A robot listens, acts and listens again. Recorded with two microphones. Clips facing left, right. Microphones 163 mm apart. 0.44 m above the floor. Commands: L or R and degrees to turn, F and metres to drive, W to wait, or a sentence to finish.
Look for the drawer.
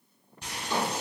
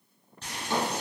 R90
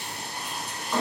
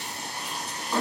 R10
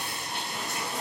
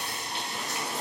W
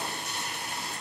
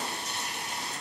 W
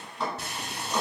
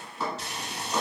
Found it: a drawer, straight ahead.